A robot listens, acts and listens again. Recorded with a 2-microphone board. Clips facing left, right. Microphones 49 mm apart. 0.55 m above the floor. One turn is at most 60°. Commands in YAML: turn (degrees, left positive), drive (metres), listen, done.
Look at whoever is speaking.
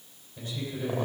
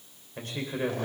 turn: -60
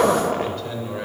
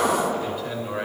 turn: -15
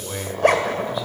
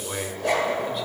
done: "Facing the man speaking, 2 to 4 m away."